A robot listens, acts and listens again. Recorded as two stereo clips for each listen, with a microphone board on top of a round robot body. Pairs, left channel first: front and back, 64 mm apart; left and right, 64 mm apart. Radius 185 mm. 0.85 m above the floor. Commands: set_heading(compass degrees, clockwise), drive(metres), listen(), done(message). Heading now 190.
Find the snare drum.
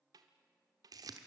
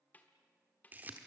set_heading(35)
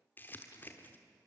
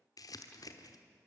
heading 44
set_heading(34)
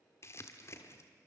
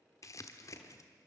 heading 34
listen()
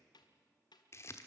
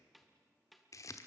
done("Facing the snare drum, under 1 m away.")